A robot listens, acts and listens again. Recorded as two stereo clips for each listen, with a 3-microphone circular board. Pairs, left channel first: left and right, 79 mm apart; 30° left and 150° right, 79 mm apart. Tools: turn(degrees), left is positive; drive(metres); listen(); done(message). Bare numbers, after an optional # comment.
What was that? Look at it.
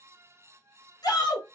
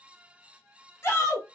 # The shout: 80° left.
turn(80)
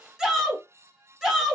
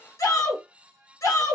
# The shout is now 10° right.
turn(-10)
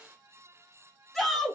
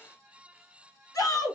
done("Facing the shout.")